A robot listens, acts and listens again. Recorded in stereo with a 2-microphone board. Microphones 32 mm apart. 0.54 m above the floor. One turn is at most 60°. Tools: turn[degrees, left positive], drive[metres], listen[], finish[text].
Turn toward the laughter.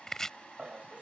Thought: The laughter: about 45° right or 135° right.
Action: turn[-45]
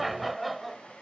Action: finish[Found it: laughter, straight ahead.]